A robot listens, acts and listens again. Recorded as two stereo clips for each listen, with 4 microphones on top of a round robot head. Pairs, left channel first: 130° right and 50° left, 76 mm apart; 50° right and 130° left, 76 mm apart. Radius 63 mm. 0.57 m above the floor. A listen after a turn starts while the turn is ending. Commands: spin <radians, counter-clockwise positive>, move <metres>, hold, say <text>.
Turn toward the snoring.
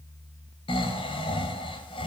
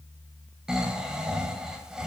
spin -2.53
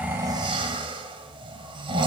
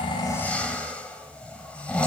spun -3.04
spin 0.52
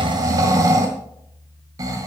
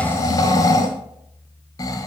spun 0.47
say Facing the snoring.